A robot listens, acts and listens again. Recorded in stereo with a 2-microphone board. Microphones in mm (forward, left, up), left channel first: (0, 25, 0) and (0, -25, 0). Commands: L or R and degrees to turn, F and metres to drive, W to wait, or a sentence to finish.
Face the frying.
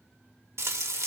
R65
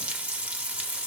R30
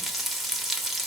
Facing the frying.